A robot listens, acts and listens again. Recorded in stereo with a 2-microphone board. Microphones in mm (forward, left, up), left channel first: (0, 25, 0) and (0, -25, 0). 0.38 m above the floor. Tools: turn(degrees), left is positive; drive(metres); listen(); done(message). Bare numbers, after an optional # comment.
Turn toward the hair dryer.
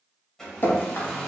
turn(30)
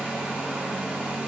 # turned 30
# So it is at 20° right.
turn(-20)
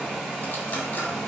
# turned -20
done("Facing the hair dryer.")